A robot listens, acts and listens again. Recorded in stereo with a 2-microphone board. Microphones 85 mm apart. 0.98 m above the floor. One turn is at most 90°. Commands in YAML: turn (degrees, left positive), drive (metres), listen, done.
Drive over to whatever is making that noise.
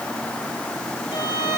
turn: 90
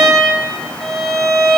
drive: 1.0
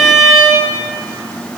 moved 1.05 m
drive: 1.0
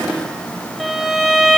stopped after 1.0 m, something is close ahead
done: "Arrived at the violin, straight ahead."